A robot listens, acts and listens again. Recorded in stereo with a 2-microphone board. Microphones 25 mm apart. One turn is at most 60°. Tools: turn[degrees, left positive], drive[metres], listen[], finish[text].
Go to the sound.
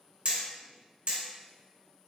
Thought: The hammering: about 45° right or 135° right.
Action: turn[-45]
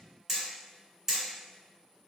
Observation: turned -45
Action: drive[1.0]
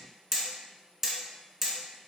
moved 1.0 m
Thought: The hammering is now 10° right.
Action: turn[-10]
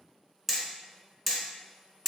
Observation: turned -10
Action: drive[1.0]
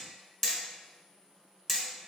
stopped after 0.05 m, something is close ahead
Thought: The hammering is now 10° left.
Action: turn[10]
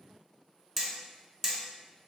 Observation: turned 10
Action: finish[Arrived at the hammering, straight ahead.]